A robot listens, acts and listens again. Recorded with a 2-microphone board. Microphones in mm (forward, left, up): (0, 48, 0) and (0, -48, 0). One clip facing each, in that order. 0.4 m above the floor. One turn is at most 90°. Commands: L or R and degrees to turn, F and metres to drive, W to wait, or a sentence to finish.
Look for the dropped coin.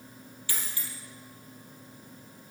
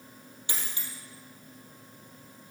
R25
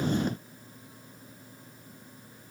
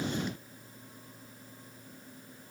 W
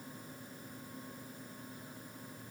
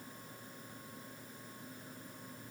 I heard a dropped coin, but can't make it out now. It was about straight ahead or 130° right.